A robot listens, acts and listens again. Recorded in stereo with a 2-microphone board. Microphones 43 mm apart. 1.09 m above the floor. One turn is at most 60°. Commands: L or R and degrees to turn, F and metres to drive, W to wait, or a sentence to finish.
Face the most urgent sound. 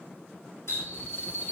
L45
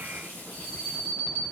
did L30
L60
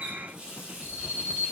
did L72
L25
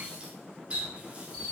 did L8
L20
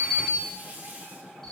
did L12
Found it: an alarm, straight ahead, 2 to 4 m away.